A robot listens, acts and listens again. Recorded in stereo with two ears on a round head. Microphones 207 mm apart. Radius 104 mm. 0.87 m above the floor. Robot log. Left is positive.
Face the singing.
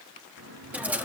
note: The singing: about 65° right or 115° right.
cmd yaw -65
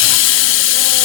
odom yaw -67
cmd idle
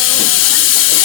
cmd idle
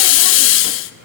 note: So it is at 45° right.
cmd yaw -45
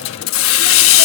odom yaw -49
cmd idle
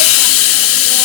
cmd idle
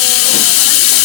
end: Facing where the singing came from. I can't hear it now.